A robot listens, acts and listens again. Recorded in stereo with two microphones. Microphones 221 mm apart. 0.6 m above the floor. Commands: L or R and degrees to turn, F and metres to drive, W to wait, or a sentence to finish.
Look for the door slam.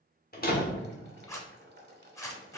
L40
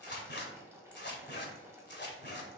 W
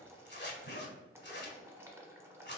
I heard a door slam, but can't make it out now. It was about straight ahead or 100° left.